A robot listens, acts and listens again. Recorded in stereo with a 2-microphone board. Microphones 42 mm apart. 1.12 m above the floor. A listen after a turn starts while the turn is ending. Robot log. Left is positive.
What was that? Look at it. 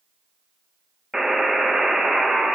cmd yaw -30
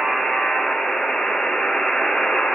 note: So it is at 15° left.
cmd yaw +15
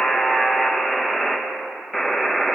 end: Facing the buzzer.